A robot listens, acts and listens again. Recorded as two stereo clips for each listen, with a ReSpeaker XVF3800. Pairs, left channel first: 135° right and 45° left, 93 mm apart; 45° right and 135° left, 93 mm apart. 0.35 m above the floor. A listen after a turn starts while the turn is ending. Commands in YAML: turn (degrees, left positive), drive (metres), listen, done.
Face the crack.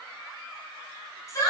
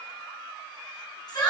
listen: true
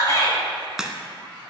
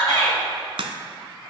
turn: 130
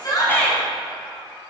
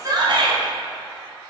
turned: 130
done: "Facing where the crack came from. I can't hear it now."